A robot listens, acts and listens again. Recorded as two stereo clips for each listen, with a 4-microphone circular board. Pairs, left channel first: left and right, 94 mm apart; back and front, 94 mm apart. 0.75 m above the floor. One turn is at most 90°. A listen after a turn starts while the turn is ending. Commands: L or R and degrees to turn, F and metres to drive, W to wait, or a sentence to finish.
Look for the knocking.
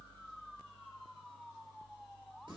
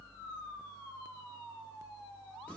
W
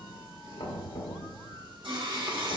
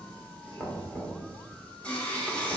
L90
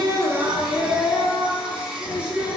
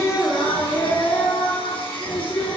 L15
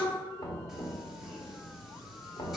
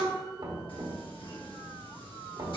L35
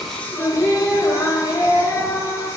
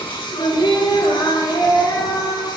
W
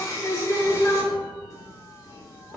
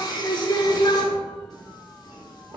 R10
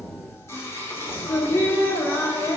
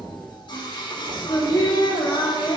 W
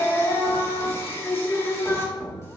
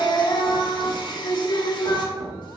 Facing the knocking, 1 to 2 m away.